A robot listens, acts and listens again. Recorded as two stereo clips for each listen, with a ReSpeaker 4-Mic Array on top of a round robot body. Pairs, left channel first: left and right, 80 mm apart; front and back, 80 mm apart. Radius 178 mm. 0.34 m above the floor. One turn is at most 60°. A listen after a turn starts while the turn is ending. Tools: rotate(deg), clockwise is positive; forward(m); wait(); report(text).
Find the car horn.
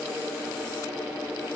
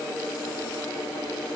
wait()
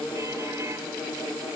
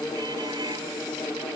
wait()
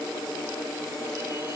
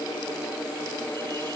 report("I can't make out a car horn to turn to.")